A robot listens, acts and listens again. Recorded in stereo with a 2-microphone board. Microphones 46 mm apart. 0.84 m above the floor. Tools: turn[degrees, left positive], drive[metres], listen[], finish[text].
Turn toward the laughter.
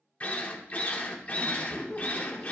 Thought: The laughter: about 15° left or 165° left.
Action: turn[15]
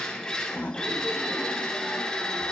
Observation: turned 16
Thought: So it is at 150° left.
Action: turn[150]
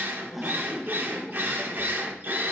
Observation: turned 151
Action: finish[Found it: laughter, straight ahead, under 1 m away.]